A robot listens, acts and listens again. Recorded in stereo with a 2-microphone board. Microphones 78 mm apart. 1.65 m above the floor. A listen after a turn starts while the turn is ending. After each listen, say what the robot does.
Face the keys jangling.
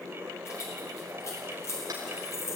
Turn 40° left.
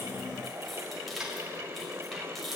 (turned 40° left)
Facing the keys jangling.